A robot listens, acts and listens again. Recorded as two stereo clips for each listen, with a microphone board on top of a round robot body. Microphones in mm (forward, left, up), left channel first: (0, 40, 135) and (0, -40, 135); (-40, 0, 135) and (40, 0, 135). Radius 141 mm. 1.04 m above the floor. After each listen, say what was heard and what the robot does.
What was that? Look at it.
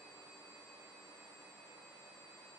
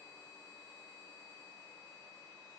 Keep listening.
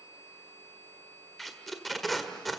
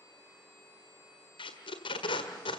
The tape being pulled: straight behind. Turn 180° left.
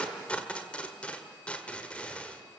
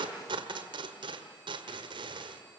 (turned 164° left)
The tape being pulled is now 15° left. Turn 15° left.
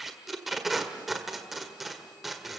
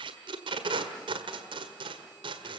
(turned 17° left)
Found it: tape being pulled, straight ahead.